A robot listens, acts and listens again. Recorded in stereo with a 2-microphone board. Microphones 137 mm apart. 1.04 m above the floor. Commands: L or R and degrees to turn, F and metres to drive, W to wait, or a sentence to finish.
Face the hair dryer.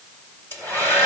L15
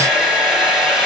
Found it: a hair dryer, straight ahead.